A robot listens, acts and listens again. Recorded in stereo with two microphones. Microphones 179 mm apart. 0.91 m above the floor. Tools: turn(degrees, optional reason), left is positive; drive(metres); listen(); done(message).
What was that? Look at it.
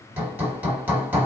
turn(degrees=-30)
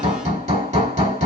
turn(degrees=-135, reason="So it is at 135° right.")
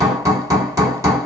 turn(degrees=-20, reason="The hammering is now 20° right.")
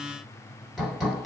done("Found it: hammering, straight ahead, 1 to 2 m away.")